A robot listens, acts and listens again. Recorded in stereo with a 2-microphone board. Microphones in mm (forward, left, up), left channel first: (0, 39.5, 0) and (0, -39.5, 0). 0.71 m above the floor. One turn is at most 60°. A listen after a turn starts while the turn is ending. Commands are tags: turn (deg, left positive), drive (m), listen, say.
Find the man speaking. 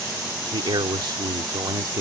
<turn deg="-55"/>
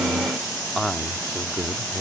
<turn deg="30"/>
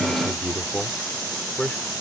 <turn deg="15"/>
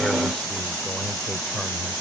<listen/>
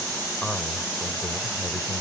<turn deg="10"/>
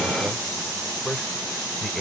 <say>Facing the man speaking.</say>